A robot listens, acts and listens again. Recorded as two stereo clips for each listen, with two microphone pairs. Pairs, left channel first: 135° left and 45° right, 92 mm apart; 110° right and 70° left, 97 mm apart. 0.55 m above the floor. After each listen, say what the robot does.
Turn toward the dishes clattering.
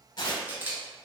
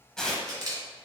Keep listening.
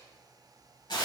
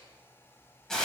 Keep listening.
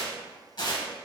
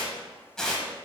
I can't make out dishes clattering to turn to.